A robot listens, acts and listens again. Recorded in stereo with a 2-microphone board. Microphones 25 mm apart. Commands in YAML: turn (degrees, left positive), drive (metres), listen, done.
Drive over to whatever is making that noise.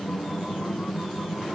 listen: true
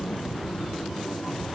listen: true
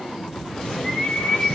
turn: 20
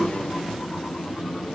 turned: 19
listen: true
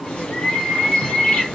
turn: 140
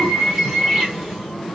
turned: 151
turn: -10
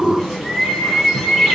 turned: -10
drive: 1.0
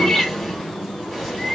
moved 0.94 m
drive: 1.0
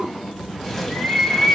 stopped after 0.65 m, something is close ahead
done: "Arrived at the bird, straight ahead."